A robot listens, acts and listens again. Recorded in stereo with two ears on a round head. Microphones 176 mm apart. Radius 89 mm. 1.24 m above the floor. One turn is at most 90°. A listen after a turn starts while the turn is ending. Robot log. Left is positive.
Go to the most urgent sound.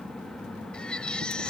cmd yaw +30
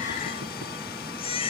note: So it is at 145° left.
cmd yaw +90
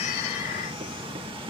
note: Nothing new. It was at 55° left.
cmd yaw +55
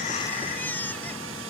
note: The baby crying is now 10° left.
cmd yaw +10
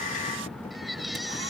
cmd fwd 1.0
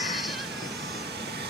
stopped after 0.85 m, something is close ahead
cmd idle
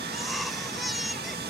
end: Something is in my way. I am facing the baby crying but have not reached it.